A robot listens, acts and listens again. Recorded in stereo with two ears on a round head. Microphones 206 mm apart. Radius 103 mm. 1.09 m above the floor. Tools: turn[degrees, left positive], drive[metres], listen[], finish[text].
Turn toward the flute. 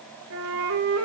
Thought: The flute: about 70° right or 110° right.
Action: turn[-70]
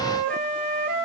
Thought: So it is at 35° right.
Action: turn[-35]
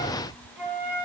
Action: finish[Facing the flute, 2 to 4 m away.]